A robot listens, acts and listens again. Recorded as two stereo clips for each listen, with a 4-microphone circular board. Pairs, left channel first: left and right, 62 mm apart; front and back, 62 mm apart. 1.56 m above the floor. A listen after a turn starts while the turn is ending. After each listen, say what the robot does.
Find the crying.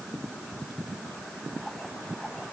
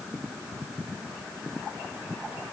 Keep listening.
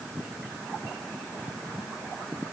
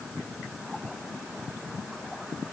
Keep listening.
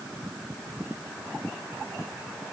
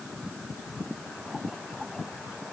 I can't make out crying.